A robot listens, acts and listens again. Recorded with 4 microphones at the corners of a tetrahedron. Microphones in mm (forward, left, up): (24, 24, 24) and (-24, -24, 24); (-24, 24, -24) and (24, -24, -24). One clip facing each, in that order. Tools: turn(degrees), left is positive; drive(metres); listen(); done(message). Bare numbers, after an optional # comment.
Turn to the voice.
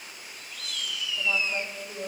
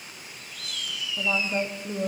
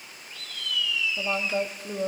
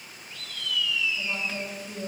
# The woman speaking: 155° left.
turn(155)
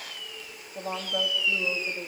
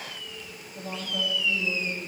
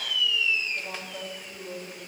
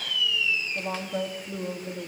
done("Found it: a woman speaking, straight ahead.")